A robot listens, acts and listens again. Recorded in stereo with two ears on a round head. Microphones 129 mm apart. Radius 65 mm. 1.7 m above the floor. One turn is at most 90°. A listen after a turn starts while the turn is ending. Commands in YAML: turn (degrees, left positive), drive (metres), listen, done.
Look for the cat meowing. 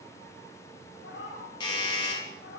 turn: 90
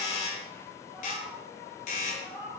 done: "Found it: a cat meowing, straight ahead."